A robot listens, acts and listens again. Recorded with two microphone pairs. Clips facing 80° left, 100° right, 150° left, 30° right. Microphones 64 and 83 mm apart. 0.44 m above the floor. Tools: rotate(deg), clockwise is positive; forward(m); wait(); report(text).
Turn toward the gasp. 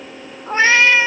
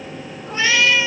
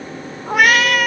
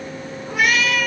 wait()
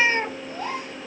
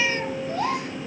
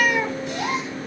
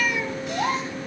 rotate(85)
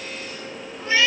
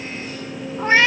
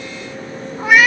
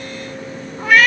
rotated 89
report("Facing where the gasp came from. I can't hear it now.")